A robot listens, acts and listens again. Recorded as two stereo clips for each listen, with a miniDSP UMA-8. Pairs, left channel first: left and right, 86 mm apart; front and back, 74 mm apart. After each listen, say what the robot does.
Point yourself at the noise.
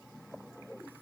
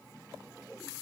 Keep listening.
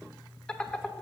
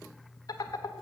Turn 10° left.
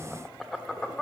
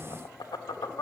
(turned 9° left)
Facing the laughter, 1 to 2 m away.